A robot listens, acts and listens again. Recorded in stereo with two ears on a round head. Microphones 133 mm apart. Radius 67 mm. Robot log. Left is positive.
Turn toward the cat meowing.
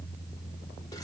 cmd idle
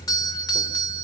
cmd idle
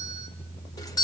end: I can't make out a cat meowing to turn to.